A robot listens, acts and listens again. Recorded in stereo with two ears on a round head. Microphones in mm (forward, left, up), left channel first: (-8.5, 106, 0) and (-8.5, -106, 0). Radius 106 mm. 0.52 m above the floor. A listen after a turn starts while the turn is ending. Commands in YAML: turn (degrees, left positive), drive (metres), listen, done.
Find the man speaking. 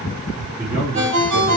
turn: -40
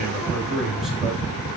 done: "Facing the man speaking."